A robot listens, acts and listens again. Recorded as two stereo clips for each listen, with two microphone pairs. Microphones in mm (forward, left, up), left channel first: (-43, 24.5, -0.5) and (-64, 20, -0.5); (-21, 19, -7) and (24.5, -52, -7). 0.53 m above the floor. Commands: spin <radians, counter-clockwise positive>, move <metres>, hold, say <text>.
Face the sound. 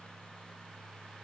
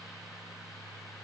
hold
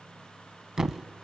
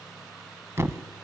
spin -1.92
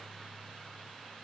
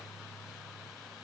say I heard a thud from this way, but can't make it out now.